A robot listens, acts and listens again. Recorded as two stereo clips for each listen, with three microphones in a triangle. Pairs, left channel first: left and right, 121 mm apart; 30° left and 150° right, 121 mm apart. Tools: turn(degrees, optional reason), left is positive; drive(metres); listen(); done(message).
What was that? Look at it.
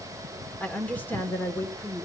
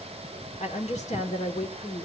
turn(degrees=25, reason="The woman speaking: 25° left.")
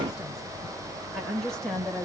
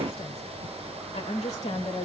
done("Facing the woman speaking.")